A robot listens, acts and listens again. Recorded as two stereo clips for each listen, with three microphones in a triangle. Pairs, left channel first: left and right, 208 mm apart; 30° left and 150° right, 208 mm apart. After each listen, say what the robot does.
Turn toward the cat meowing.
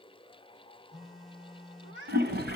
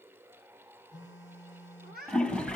Turn 105° right.
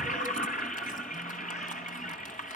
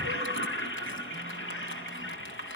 Keep listening.
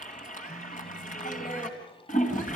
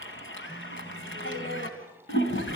Keep listening.
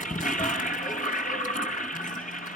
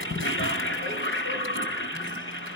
I heard a cat meowing from this way, but can't make it out now.